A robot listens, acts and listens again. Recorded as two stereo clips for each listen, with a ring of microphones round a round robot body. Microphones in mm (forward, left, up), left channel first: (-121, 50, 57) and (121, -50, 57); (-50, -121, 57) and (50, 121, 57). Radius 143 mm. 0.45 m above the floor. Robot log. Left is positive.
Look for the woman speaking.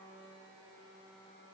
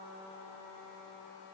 cmd idle
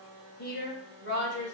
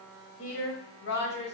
note: The woman speaking: 160° right.
cmd yaw -160
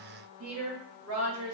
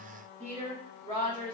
end: Facing the woman speaking.